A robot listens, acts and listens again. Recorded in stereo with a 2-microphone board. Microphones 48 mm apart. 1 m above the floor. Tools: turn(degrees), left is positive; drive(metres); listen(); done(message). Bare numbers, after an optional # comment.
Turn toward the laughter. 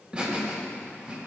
# The laughter: about 35° right or 145° right.
turn(-35)
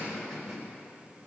done("Found it: laughter, straight ahead, over 4 m away.")